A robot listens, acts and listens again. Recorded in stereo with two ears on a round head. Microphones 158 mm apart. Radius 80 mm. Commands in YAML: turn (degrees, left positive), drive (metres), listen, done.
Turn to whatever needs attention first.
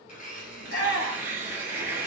turn: 65
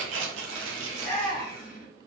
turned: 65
turn: 10
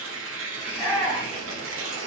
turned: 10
done: "Facing the shout, 1 to 2 m away."